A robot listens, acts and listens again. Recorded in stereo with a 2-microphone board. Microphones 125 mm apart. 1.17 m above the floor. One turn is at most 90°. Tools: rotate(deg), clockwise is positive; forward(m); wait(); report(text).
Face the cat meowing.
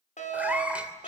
rotate(30)
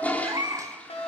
rotate(90)
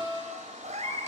rotate(70)
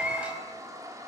rotate(10)
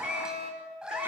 rotate(10)
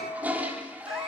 wait()
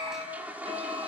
wait()
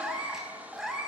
report("Found it: a cat meowing, straight ahead, over 4 m away.")